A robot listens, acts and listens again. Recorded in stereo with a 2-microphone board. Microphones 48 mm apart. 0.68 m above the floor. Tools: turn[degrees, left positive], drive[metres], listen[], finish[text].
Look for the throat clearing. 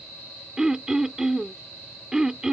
Action: turn[-30]
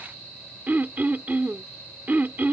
Thought: So it is at 140° right.
Action: turn[-140]
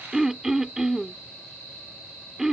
Thought: The throat clearing is now 10° right.
Action: turn[-10]
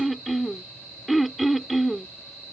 Action: finish[Facing the throat clearing.]